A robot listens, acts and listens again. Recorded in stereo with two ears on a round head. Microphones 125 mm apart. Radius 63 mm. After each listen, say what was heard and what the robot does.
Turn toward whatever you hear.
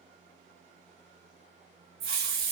Turn 90° right.
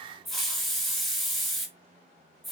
Facing the hiss.